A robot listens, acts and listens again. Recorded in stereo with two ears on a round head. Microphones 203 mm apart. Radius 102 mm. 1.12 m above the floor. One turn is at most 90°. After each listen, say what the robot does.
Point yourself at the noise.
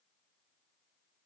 Keep listening.
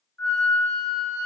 Turn 30° left.
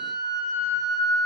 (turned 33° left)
Turn 90° left.
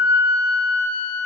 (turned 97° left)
Turn 45° left.
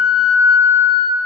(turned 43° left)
Facing the flute, under 1 m away.